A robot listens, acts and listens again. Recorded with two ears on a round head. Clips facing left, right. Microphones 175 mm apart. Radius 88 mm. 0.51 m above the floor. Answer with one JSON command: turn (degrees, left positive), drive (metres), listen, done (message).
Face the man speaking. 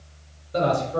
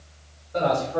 {"turn": 45}
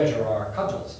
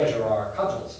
{"turn": 110}
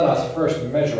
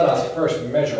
{"turn": -10}
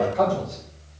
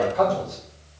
{"done": "Facing the man speaking, 2 to 4 m away."}